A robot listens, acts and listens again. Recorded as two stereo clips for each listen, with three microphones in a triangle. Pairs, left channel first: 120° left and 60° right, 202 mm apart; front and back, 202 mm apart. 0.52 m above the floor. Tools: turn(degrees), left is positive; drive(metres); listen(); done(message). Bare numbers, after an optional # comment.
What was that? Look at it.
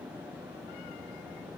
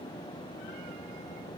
listen()
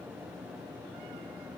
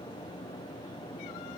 listen()
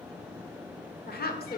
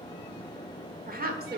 # The woman speaking: 155° left.
turn(155)
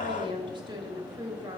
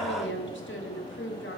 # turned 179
done("Found it: a woman speaking, straight ahead.")